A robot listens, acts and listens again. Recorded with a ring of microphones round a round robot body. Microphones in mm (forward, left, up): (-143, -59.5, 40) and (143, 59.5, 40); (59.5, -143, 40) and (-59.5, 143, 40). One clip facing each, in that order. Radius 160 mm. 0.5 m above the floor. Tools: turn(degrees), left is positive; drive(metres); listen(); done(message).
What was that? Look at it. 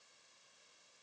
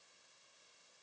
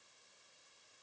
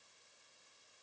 listen()
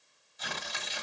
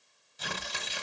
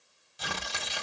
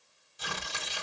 turn(degrees=-35)
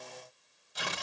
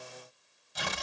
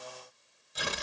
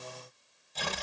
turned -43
turn(degrees=10)
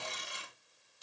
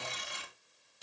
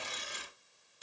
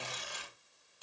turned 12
done("Facing the tearing paper.")